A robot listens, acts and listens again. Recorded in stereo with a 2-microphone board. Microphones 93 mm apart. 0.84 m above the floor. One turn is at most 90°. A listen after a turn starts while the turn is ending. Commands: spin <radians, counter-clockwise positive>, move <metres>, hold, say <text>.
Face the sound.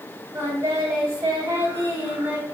spin -0.44
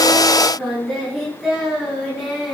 say Facing the singing, 2 to 4 m away.